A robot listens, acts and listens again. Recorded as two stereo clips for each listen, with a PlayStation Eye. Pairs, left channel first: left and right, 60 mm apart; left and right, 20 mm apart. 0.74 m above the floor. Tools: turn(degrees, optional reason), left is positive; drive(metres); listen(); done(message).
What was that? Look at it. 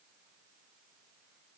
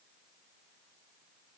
listen()
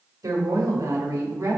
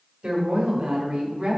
turn(degrees=-60, reason="The woman speaking: about 60° right or 120° right.")
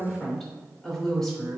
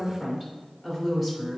turn(degrees=10, reason="So it is at 10° left.")
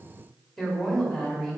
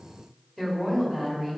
done("Facing the woman speaking, 2 to 4 m away.")